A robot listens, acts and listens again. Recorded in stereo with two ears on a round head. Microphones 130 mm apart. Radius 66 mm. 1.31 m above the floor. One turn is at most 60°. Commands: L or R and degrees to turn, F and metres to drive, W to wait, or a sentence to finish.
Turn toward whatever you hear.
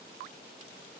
W
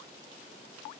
W
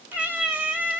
R30
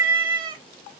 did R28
R60
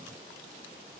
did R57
R60
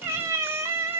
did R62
R15
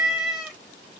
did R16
Facing the cat meowing.